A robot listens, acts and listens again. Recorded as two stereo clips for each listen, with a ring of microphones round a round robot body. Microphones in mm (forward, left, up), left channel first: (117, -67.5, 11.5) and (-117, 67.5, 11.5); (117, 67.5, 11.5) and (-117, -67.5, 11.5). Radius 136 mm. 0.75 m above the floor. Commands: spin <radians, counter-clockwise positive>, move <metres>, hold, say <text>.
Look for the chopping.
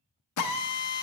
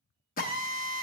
hold
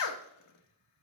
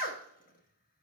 hold
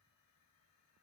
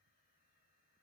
say I can't make out chopping to turn to.